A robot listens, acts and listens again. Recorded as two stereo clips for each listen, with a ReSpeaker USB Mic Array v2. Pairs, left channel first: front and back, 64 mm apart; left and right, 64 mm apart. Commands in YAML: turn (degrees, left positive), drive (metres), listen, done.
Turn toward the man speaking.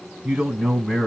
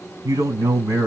turn: -100
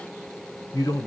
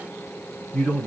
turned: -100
turn: 15
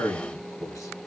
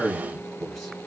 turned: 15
done: "Facing the man speaking."